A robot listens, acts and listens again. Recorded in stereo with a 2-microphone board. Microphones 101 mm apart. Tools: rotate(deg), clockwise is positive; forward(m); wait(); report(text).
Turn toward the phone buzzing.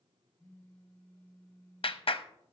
rotate(-15)
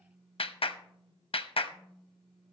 report("Facing the phone buzzing.")